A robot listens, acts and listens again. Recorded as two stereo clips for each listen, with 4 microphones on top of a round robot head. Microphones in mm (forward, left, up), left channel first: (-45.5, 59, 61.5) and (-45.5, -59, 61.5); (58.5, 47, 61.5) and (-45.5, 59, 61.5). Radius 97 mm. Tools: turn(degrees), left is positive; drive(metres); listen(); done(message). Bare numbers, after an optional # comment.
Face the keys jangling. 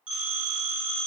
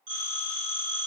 listen()
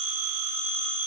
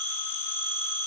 listen()
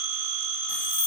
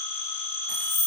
# The keys jangling: 85° left.
turn(85)
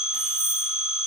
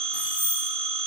done("Facing the keys jangling, 1 to 2 m away.")